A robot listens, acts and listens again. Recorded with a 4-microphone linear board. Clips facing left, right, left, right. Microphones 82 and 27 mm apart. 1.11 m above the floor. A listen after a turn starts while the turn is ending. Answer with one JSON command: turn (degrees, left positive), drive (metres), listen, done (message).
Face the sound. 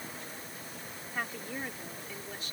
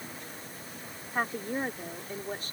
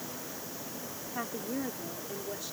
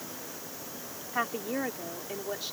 {"turn": -40}
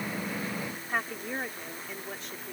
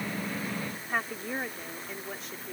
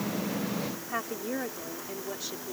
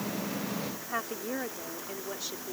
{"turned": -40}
{"done": "Facing the woman speaking."}